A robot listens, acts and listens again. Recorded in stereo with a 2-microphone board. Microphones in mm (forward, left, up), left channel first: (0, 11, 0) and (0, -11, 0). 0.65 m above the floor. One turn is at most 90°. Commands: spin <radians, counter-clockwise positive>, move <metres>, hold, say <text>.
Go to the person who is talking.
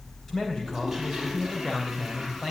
spin 0.44
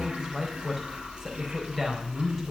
move 1.0
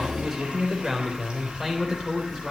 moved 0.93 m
move 1.0
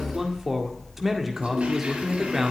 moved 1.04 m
spin -0.17
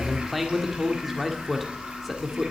move 1.0
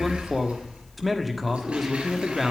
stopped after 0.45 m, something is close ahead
say I am next to the man speaking.